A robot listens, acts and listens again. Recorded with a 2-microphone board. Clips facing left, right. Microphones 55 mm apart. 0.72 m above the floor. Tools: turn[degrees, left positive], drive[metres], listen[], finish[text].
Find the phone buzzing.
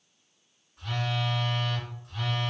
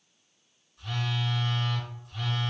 Thought: The phone buzzing: about 60° left or 120° left.
Action: turn[60]
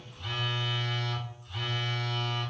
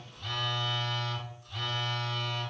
Thought: So it is at 20° left.
Action: turn[20]
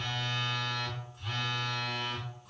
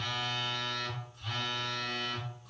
Action: finish[Found it: a phone buzzing, straight ahead.]